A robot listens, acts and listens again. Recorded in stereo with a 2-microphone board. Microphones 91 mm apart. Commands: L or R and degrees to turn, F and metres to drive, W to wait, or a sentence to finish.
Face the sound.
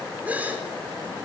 R15
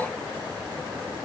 W
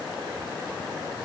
I heard a gasp, but can't make it out now. It was about straight ahead or 150° right.